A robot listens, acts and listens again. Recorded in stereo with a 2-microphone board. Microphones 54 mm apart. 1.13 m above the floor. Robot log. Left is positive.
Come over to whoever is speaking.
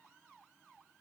cmd idle
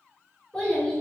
note: The child speaking: about 25° left or 155° left.
cmd yaw +25
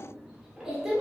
cmd fwd 1.0
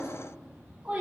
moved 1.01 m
note: The child speaking is now 10° right.
cmd yaw -10
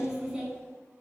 cmd fwd 1.0
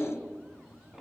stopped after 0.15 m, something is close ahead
end: Arrived at the child speaking, straight ahead.